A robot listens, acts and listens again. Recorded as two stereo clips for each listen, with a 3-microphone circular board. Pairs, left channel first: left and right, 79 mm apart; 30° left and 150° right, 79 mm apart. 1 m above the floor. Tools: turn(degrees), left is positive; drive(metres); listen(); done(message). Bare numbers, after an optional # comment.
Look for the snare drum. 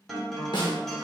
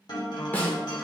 # The snare drum: 95° left.
turn(95)
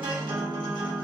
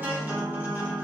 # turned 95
listen()
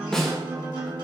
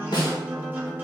# The snare drum is now 10° left.
turn(10)
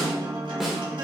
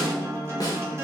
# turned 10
done("Found it: a snare drum, straight ahead, 1 to 2 m away.")